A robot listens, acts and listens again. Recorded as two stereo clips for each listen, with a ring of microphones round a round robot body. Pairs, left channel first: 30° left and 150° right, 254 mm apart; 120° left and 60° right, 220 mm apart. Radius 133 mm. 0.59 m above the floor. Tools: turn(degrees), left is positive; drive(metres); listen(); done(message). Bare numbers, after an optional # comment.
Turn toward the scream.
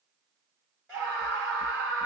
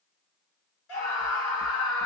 # The scream: 115° left.
turn(115)
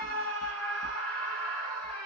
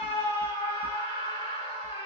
done("Facing the scream, 2 to 4 m away.")